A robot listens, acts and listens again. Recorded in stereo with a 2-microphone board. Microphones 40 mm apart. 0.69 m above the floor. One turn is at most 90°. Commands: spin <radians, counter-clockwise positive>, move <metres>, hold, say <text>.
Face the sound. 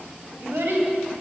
spin -1.57
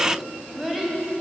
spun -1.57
say Found it: a child speaking, straight ahead.